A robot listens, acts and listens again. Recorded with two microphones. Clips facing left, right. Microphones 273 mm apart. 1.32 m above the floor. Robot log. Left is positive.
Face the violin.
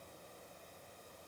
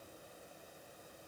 cmd idle
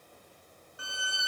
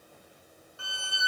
note: The violin: about 20° left or 160° left.
cmd yaw +20
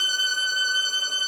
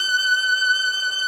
note: So it is at 140° left.
cmd yaw +140
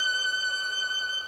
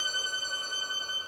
note: The violin is now 40° right.
cmd yaw -40
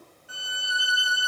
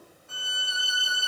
end: Found it: a violin, straight ahead, under 1 m away.